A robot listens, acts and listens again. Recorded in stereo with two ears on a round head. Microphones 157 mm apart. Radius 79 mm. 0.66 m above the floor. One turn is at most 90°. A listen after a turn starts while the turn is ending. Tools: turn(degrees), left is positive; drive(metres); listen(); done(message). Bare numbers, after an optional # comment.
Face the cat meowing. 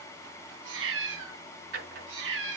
turn(-90)
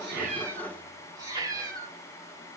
# So it is at 20° right.
turn(-20)
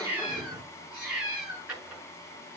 # The cat meowing is now 10° right.
turn(-10)
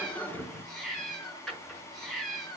done("Found it: a cat meowing, straight ahead, over 4 m away.")